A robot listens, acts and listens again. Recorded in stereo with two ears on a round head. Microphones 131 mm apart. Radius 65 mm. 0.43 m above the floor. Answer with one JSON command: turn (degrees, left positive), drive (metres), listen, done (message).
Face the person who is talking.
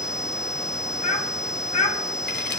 {"turn": 50}
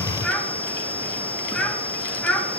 {"done": "Found it: a child speaking, straight ahead, 2 to 4 m away."}